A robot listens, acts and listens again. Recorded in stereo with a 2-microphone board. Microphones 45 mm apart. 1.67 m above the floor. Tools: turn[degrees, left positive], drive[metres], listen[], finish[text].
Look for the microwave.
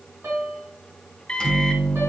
Thought: The microwave: about 20° left or 160° left.
Action: turn[20]
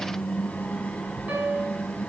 Thought: So it is at 145° left.
Action: turn[145]
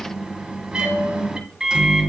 Thought: The microwave is now 20° right.
Action: turn[-20]
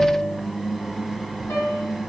Action: finish[Facing the microwave, 1 to 2 m away.]